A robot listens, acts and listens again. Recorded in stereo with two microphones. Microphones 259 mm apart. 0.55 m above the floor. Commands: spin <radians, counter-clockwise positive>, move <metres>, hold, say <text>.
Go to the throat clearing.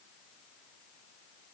hold
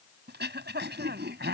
spin -0.70
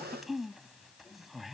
move 1.0
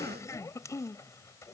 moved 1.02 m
spin 0.17
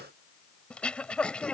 move 1.0
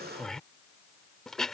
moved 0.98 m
move 1.0
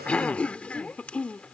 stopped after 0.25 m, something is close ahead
say Arrived at the throat clearing, straight ahead.